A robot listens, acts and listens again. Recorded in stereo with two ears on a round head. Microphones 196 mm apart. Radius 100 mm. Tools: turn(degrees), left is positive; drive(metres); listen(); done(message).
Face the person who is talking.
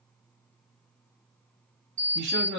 turn(degrees=-55)
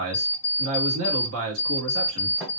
turn(degrees=-70)
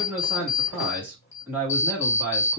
turn(degrees=-10)
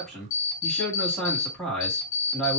done("Found it: a man speaking, straight ahead.")